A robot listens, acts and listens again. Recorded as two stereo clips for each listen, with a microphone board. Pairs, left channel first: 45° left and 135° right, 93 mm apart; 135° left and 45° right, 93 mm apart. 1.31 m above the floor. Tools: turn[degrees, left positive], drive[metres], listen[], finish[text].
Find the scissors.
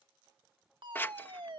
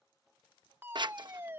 Thought: The scissors: 20° right.
Action: turn[-20]
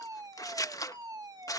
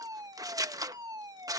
Action: finish[Facing the scissors.]